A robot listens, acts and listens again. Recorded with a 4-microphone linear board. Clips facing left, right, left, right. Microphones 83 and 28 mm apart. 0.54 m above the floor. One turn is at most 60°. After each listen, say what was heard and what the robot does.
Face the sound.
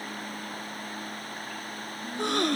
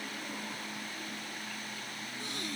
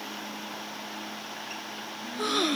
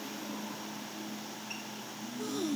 The gasp: about 65° left or 115° left. Turn 60° left.
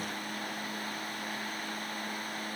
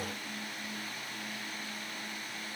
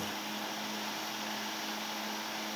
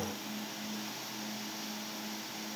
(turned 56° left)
Keep listening.
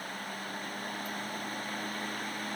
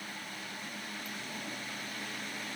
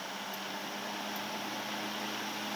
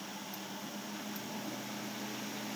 I heard a gasp, but can't make it out now. It was about 10° left or 55° left.